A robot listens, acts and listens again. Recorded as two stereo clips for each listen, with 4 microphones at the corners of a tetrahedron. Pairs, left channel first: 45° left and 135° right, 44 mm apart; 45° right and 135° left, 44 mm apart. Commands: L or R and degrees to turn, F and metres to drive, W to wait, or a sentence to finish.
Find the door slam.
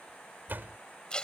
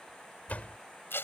R95
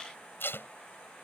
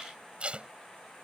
Facing where the door slam came from. I can't hear it now.